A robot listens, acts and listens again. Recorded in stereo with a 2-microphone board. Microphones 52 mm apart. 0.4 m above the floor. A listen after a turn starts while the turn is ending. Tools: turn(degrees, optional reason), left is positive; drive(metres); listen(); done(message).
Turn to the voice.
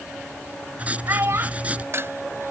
turn(degrees=-60, reason="The child speaking: about 60° right or 120° right.")
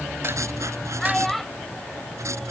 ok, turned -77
done("Found it: a child speaking, straight ahead.")